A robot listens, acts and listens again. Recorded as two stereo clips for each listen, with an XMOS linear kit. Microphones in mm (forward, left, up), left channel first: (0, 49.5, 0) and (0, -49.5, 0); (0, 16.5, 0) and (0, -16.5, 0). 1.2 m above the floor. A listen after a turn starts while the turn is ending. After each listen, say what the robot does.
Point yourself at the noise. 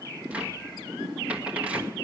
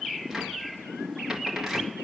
Turn 30° right.
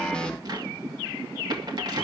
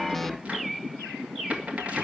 Turn 135° right.
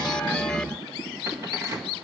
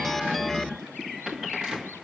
Turn 30° right.
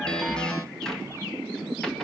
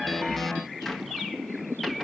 Found it: a cupboard door, straight ahead, 2 to 4 m away.